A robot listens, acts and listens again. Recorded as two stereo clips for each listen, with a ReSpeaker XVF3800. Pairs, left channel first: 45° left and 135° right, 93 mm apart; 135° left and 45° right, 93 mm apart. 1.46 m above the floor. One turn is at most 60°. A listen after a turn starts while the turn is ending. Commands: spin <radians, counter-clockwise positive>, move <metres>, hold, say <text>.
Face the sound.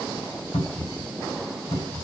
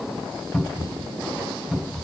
spin 0.70
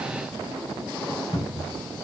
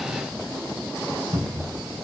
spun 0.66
say Facing the cupboard door, 2 to 4 m away.